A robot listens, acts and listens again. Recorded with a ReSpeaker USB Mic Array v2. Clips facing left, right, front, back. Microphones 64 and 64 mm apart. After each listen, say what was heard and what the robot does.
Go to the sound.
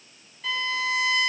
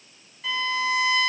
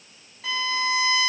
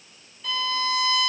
Drive 1.0 m forward.
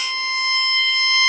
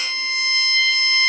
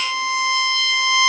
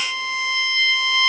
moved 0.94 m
Drive 1.0 m forward.
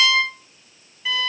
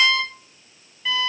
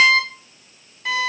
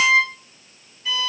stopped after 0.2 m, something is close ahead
Arrived at the violin, straight ahead.